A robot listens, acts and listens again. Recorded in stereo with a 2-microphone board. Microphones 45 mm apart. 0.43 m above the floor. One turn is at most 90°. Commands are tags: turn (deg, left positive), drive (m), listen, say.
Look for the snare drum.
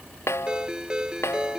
<turn deg="90"/>
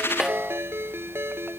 <turn deg="-15"/>
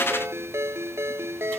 <listen/>
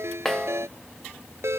<say>Found it: a snare drum, straight ahead.</say>